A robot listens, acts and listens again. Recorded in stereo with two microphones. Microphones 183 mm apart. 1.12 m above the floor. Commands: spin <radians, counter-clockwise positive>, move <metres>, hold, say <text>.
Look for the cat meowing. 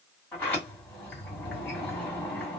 hold
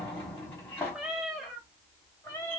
spin 0.26
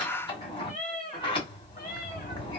spin 2.36
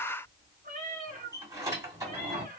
spin -0.79
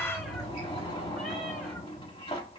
hold
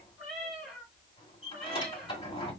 say Found it: a cat meowing, straight ahead.